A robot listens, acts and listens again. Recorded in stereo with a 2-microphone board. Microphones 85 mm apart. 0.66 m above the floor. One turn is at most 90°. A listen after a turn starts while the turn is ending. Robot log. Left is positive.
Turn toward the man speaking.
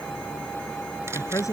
note: The man speaking: about 40° left or 140° left.
cmd yaw +40
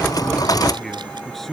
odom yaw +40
end: Found it: a man speaking, straight ahead.